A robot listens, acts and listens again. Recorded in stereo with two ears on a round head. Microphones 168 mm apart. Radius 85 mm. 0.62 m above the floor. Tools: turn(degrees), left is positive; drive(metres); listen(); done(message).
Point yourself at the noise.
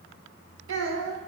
turn(degrees=-90)
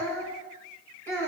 turn(degrees=10)
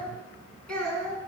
done("Found it: a child speaking, straight ahead, 2 to 4 m away.")